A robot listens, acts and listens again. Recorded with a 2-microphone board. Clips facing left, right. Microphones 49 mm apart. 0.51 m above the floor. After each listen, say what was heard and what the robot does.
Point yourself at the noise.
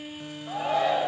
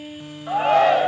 The shout: about 70° right or 110° right. Turn 70° right.
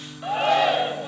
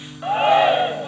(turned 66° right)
So it is at 25° right. Turn 25° right.
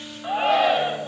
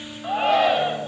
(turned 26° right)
Found it: a shout, straight ahead, 2 to 4 m away.